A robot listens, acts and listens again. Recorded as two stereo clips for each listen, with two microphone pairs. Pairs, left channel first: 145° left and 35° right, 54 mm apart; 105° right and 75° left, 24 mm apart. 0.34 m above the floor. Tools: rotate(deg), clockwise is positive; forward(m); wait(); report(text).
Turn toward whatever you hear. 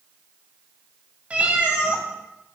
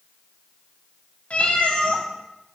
rotate(100)
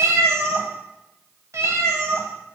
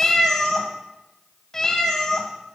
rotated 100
rotate(40)
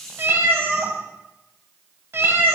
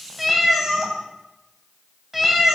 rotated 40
report("Found it: a cat meowing, straight ahead.")